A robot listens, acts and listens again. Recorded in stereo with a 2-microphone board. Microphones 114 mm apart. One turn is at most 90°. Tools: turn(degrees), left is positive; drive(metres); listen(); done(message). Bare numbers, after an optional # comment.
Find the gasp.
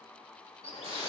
listen()
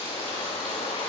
listen()
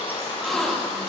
turn(30)
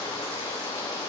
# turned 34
listen()
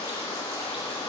done("I heard a gasp, but can't make it out now. It was about 30° right or 145° left.")